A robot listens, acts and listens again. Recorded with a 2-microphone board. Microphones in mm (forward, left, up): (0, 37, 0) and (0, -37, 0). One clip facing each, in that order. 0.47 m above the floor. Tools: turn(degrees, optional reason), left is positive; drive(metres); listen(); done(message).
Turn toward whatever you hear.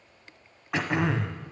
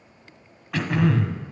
turn(degrees=20, reason="The throat clearing: about 20° left or 160° left.")
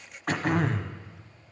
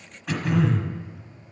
turn(degrees=135, reason="So it is at 135° left.")
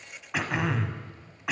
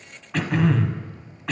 turn(degrees=10, reason="The throat clearing is now 10° left.")
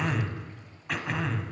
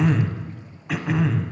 done("Facing the throat clearing.")